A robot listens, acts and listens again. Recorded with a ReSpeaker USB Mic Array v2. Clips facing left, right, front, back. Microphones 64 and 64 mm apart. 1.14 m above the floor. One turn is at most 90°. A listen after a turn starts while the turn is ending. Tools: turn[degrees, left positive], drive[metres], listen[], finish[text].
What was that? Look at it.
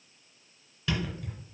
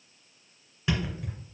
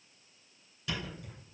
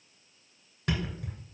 Thought: The thud: 155° right.
Action: turn[-90]
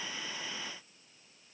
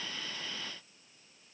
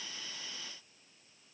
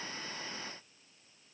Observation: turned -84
Thought: Nothing new. It was at 70° right.
Action: turn[-70]
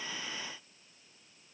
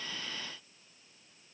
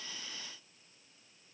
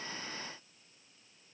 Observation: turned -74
Action: finish[Facing where the thud came from. I can't hear it now.]